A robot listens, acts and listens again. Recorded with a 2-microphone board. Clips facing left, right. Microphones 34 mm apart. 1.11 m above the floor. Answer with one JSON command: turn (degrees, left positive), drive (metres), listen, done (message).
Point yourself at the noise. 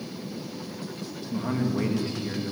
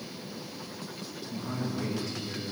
{"turn": 30}
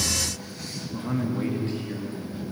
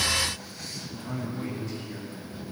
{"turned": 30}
{"turn": 35}
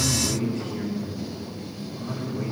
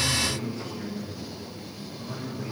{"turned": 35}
{"turn": 120}
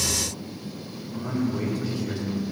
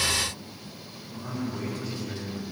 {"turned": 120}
{"turn": 15}
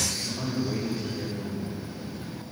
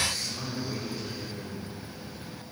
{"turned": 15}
{"done": "Facing the man speaking."}